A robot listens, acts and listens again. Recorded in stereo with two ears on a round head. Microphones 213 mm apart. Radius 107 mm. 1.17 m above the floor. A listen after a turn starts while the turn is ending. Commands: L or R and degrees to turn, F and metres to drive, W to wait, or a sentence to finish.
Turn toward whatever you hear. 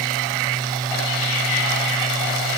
W
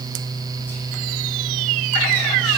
W
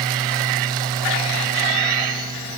I can't make out anything to turn to.